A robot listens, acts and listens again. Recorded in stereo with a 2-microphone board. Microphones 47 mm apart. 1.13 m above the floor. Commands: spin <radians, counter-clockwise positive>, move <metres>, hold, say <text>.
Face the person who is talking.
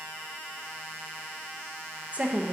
spin -0.52
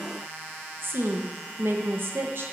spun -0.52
spin -2.09
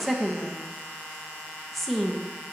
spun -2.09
say Found it: a woman speaking, straight ahead, under 1 m away.